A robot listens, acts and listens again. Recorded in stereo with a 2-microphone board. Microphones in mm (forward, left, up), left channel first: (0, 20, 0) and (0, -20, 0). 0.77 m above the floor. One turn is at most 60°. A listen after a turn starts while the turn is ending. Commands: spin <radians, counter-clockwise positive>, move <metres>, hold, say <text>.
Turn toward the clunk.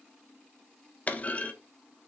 spin 0.61
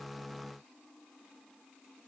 hold
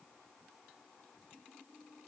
say I heard a clunk, but can't make it out now. It was about straight ahead or 110° left.